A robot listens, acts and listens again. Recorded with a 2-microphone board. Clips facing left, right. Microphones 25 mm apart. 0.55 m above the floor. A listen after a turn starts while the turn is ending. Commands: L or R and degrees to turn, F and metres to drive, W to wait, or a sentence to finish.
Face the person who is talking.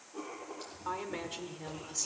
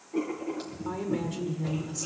L30
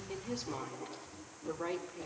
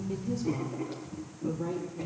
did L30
L135
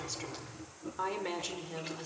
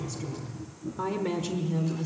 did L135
L10
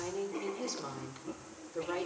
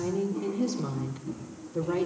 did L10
Facing the woman speaking, 1 to 2 m away.